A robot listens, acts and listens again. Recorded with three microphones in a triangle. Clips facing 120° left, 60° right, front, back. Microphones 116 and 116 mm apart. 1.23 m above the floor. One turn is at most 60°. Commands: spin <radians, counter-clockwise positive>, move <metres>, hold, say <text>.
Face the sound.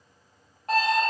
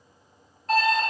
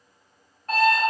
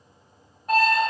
spin 1.05
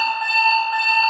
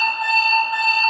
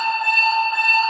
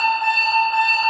spin 1.05
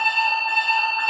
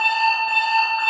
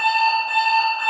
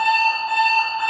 spin 0.44
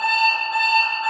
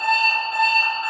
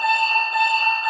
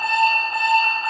say Facing the alarm clock, 1 to 2 m away.